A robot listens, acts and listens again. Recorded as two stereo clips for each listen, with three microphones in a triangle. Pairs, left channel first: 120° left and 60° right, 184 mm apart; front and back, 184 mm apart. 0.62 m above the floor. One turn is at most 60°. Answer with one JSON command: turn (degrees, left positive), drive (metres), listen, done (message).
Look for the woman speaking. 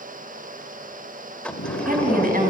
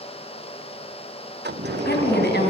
{"turn": -25}
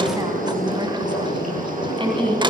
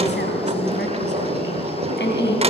{"done": "Facing the woman speaking, over 4 m away."}